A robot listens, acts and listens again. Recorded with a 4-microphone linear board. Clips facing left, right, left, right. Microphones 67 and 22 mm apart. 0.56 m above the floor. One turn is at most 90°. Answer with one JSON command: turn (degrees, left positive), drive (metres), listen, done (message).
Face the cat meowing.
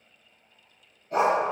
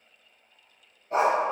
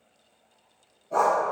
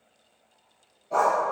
{"listen": true}
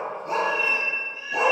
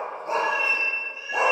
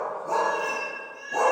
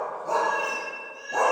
{"turn": -20}
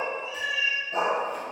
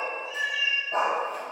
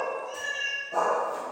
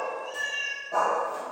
{"turn": -90}
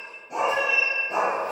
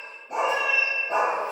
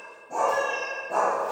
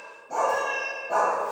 {"done": "Facing the cat meowing, 1 to 2 m away."}